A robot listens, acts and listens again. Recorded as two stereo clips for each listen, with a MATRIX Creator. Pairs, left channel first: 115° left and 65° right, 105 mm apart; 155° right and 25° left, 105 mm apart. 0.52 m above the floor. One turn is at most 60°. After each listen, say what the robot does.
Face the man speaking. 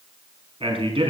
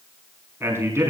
Turn 40° right.
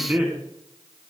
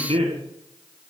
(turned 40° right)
Turn 10° left.
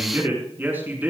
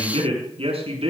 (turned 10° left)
Found it: a man speaking, straight ahead, over 4 m away.